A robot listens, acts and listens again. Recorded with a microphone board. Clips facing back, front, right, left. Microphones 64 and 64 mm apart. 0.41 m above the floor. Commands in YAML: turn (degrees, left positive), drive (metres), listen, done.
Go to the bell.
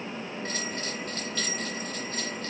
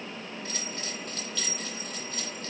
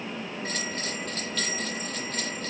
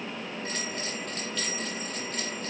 turn: -125
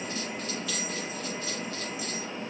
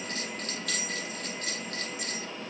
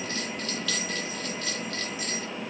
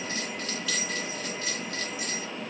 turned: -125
turn: 20
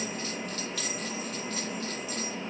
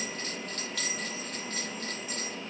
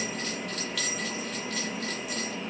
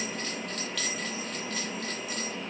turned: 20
drive: 1.0
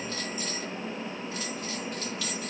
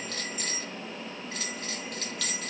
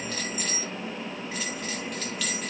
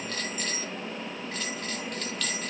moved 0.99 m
drive: 1.0
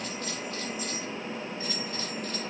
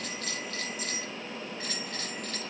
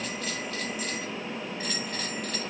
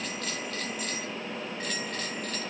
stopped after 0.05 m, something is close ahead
done: "I am next to the bell."